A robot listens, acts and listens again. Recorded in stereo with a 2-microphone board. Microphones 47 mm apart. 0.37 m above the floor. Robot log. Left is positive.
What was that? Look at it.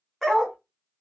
cmd yaw +30
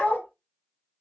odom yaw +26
note: So it is at 150° left.
cmd yaw +150
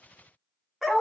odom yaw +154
end: Facing the dog barking, under 1 m away.